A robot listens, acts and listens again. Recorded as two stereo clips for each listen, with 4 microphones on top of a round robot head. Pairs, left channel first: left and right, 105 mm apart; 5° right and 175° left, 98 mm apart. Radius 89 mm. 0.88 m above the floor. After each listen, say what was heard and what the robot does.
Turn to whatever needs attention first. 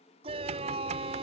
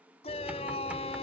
The shout: 45° right. Turn 45° right.
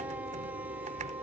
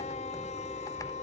The shout is now 10° right. Turn 10° right.
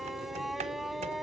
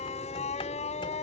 Facing the shout.